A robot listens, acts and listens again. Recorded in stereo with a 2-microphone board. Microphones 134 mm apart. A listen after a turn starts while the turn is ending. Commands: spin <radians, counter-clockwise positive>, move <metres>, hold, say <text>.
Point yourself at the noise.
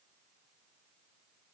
hold
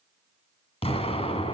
spin 0.70
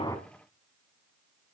hold
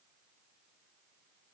say I heard an explosion, but can't make it out now. It was about straight ahead or 100° left.